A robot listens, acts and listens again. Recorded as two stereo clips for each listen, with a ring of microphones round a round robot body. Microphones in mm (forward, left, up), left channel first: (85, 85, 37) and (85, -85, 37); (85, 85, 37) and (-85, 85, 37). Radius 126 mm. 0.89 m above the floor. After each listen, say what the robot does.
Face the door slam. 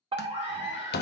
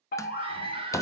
Turn 75° left.
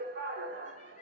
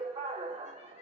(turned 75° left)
I heard a door slam from this way, but can't make it out now.